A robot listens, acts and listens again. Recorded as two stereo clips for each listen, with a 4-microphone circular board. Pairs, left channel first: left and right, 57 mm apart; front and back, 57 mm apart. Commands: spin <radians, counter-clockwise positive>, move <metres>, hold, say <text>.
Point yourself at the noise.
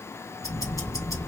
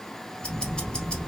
spin 1.31
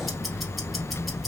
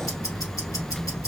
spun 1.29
say Found it: ticking, straight ahead.